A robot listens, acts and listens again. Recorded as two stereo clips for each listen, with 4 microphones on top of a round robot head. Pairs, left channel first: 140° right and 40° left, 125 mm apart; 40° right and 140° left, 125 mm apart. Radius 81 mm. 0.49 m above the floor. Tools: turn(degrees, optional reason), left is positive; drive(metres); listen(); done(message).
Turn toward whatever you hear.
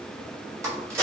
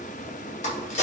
turn(degrees=-25, reason="The crack: 25° right.")
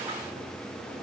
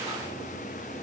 done("I heard a crack from this way, but can't make it out now.")